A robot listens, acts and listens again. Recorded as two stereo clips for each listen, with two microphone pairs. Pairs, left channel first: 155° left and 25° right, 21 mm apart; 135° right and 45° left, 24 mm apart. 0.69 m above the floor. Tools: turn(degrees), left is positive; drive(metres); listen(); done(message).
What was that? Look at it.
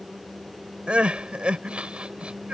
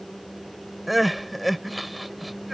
turn(degrees=-40)
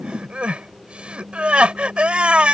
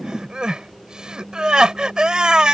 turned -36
done("Found it: crying, straight ahead.")